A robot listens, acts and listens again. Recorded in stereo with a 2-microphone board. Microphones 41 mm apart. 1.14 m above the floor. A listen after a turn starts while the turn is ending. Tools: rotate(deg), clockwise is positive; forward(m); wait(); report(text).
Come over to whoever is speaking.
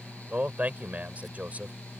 rotate(35)
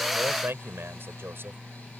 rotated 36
rotate(110)
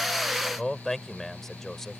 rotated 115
forward(1.0)
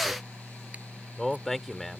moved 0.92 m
forward(1.0)
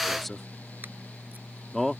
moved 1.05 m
forward(1.0)
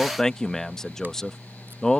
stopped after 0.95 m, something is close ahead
rotate(-10)
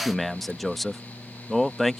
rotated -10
report("Arrived at the man speaking, straight ahead.")